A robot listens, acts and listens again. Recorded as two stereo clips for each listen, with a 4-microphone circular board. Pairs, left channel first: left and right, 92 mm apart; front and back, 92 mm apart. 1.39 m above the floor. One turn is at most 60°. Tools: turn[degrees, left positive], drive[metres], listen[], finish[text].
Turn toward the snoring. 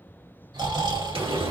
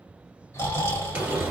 Thought: The snoring: 60° right.
Action: turn[-60]
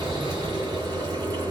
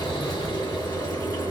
Action: listen[]
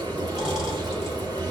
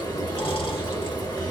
Action: listen[]
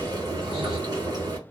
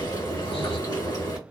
Action: finish[I heard snoring from this way, but can't make it out now.]